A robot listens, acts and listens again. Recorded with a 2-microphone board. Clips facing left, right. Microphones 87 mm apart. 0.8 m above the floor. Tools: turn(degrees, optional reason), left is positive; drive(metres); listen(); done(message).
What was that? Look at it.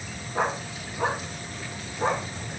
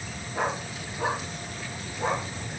turn(degrees=40, reason="The dog barking: about 40° left or 140° left.")
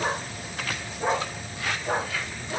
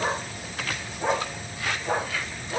turn(degrees=15, reason="So it is at 15° left.")
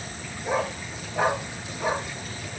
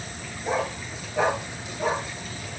turn(degrees=10, reason="The dog barking is now 10° left.")
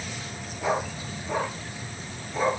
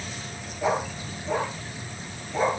done("Found it: a dog barking, straight ahead.")